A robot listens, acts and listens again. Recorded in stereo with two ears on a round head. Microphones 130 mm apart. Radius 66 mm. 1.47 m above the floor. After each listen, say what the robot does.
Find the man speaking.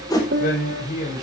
Turn 55° left.
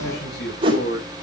Turn 70° left.
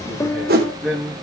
Found it: a man speaking, straight ahead.